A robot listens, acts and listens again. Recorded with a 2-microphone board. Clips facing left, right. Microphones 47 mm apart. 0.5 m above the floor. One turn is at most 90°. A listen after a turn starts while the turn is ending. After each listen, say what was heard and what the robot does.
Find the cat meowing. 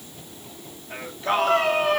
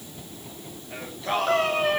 Turn 30° right.
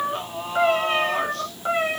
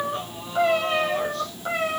So it is at 25° left. Turn 25° left.
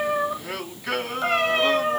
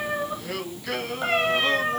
The cat meowing is now 10° right. Turn 10° right.
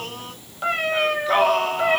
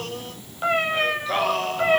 Facing the cat meowing.